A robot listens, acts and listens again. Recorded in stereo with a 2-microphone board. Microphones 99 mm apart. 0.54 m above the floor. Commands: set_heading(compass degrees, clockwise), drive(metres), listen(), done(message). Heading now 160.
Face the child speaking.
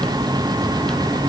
listen()
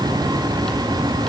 listen()
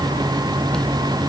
done("I can't make out a child speaking to turn to.")